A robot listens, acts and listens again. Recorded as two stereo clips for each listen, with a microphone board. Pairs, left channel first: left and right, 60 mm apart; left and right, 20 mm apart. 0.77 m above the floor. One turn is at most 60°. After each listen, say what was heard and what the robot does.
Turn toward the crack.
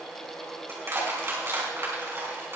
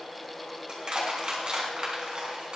Keep listening.
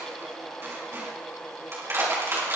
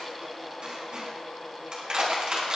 Keep listening.
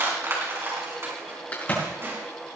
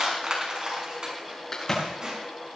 The crack: about 30° left or 150° left. Turn 30° left.
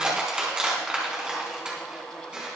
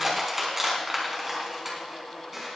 Keep listening.
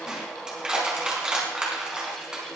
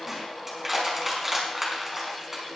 I heard a crack, but can't make it out now. It was about straight ahead or 120° left.